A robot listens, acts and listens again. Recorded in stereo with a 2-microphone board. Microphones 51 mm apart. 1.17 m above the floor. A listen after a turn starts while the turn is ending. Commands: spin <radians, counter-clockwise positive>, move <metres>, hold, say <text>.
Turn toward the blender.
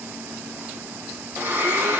spin -0.96
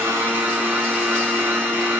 spin -0.87
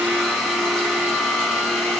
say Facing the blender.